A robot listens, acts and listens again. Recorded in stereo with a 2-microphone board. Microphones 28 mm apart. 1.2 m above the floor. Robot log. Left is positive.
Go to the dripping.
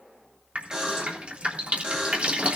note: The dripping: about 45° right or 135° right.
cmd yaw -45
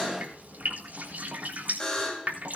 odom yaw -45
note: So it is at 85° right.
cmd yaw -85
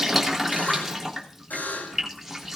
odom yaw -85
note: The dripping is now 10° right.
cmd yaw -10
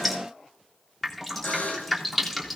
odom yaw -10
cmd fwd 1.0
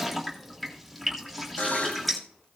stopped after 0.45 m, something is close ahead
end: Blocked. The dripping is further on, straight ahead.